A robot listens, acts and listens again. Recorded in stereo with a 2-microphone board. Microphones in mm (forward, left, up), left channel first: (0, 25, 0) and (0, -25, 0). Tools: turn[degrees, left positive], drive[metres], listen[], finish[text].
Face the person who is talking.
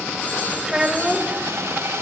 Thought: The child speaking: about 15° right or 165° right.
Action: turn[-15]
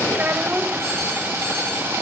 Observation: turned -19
Thought: So it is at 150° right.
Action: turn[-150]
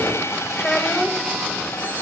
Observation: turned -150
Action: finish[Facing the child speaking.]